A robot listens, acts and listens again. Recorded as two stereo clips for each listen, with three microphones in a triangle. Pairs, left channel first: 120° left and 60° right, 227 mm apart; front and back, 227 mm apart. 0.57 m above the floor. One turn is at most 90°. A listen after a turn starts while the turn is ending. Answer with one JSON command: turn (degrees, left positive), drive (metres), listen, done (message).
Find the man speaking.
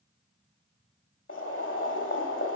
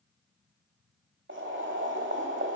{"listen": true}
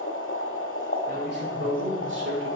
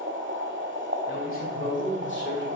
{"turn": -35}
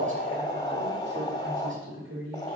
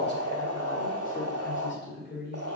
{"turn": -40}
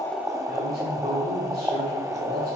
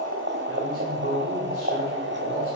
{"turn": -10}
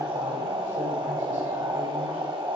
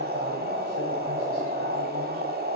{"listen": true}
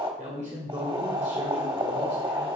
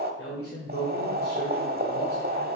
{"done": "Facing the man speaking."}